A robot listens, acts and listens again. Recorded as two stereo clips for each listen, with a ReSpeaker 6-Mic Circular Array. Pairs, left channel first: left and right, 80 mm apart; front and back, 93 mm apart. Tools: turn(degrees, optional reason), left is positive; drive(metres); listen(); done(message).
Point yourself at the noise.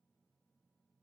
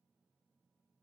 listen()
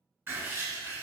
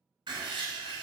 turn(degrees=-155, reason="The writing: 155° right.")
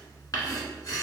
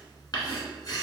turn(degrees=45, reason="The writing is now 45° left.")
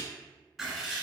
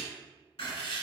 done("Facing the writing.")